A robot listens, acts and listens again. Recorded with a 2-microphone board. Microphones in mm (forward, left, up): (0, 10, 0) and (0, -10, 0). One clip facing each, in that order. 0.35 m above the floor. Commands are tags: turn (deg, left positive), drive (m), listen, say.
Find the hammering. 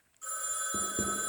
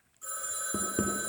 <turn deg="-25"/>
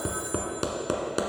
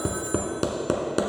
<say>Found it: hammering, straight ahead.</say>